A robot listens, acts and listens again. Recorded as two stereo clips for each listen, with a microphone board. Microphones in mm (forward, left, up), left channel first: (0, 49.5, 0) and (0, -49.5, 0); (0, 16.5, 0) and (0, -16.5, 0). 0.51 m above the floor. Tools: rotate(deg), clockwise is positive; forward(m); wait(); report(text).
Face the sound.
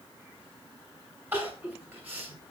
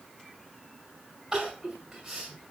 rotate(20)
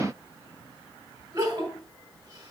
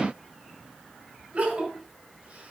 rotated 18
rotate(140)
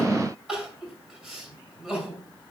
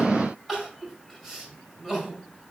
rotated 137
report("Facing the crying, over 4 m away.")